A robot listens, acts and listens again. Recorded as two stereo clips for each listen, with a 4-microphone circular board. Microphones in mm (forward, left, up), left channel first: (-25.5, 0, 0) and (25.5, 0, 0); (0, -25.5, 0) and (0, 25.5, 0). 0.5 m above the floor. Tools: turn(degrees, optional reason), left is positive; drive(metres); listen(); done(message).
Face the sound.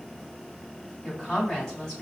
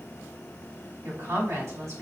turn(degrees=105, reason="The woman speaking: 105° left.")
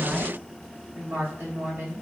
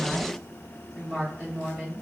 turn(degrees=30, reason="The woman speaking is now 30° left.")
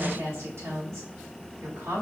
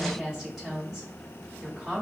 turn(degrees=10, reason="The woman speaking is now 10° left.")
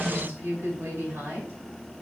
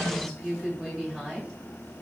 done("Facing the woman speaking.")